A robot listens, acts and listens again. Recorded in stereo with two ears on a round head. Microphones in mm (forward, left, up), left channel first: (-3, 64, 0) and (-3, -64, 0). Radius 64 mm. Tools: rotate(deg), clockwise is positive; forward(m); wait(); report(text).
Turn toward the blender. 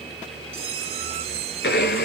rotate(-70)
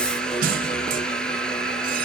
report("Found it: a blender, straight ahead.")